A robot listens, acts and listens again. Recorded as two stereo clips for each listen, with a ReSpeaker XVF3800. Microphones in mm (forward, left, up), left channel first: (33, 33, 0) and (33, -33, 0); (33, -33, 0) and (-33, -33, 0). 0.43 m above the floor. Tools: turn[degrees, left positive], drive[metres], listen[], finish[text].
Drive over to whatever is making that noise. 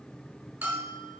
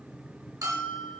Thought: The bell: 155° right.
Action: turn[-155]
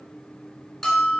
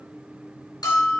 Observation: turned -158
Action: drive[1.0]
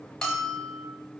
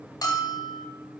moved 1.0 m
Thought: The bell is now 10° left.
Action: turn[10]
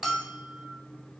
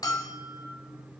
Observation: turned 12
Action: drive[1.0]
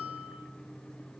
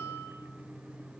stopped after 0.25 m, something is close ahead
Thought: The bell is now 10° right.
Action: turn[-10]
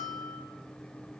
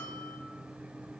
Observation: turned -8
Action: finish[I am next to the bell.]